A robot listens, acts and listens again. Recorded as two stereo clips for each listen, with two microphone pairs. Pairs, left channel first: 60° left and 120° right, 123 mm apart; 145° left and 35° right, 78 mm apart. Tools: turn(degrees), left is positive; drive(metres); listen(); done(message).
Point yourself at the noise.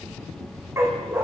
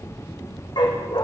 turn(degrees=165)
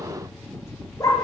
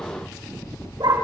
done("Facing the dog barking, over 4 m away.")